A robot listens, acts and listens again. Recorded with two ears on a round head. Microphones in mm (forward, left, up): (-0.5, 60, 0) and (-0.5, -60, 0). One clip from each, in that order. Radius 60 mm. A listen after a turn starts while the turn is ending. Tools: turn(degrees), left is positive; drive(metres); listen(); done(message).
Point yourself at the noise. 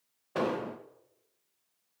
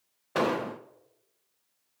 turn(degrees=-30)
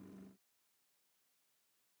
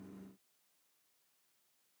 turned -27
listen()
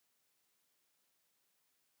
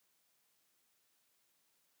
done("I heard an explosion, but can't make it out now. It was about 5° right or 125° right.")